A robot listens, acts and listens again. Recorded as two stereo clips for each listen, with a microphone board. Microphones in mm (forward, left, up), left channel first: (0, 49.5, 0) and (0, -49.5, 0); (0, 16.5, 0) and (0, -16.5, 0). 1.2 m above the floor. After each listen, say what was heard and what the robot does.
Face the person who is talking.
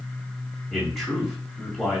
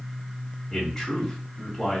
Turn 30° left.
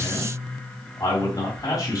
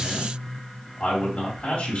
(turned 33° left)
So it is at 145° left. Turn 145° left.
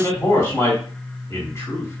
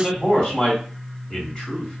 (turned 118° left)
The man speaking is now 25° left. Turn 25° left.
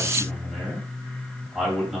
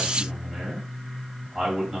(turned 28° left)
Found it: a man speaking, straight ahead.